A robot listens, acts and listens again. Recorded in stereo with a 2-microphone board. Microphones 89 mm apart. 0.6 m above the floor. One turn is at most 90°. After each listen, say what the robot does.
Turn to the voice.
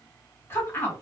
Turn 25° left.
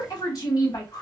Turn 90° left.
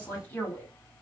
Turn 25° left.
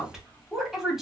Facing the woman speaking.